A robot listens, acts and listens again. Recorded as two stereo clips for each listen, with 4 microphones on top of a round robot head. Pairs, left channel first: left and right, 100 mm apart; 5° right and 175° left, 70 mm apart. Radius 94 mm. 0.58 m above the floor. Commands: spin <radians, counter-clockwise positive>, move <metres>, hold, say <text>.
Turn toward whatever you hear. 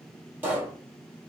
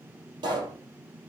spin -2.79
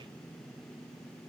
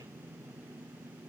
say I heard a pop from this way, but can't make it out now.